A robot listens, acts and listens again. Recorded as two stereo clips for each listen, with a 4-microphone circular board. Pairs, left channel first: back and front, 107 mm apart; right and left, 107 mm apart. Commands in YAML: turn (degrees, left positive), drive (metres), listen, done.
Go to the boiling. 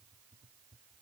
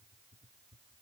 listen: true
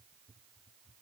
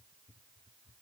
listen: true
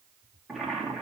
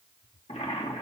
turn: -90
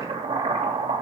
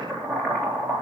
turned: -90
drive: 1.0
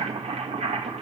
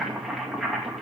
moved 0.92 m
drive: 1.0
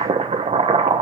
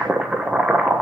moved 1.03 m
drive: 1.0
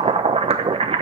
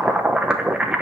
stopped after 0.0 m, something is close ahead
turn: 10
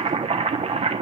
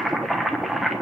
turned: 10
done: "I am next to the boiling."